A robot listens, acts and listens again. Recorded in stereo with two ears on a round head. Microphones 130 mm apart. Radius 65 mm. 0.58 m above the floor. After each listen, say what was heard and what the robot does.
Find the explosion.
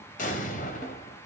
The explosion: about 60° left or 120° left. Turn 60° left.
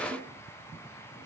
Keep listening.
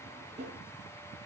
I heard an explosion, but can't make it out now. It was about straight ahead or 60° left.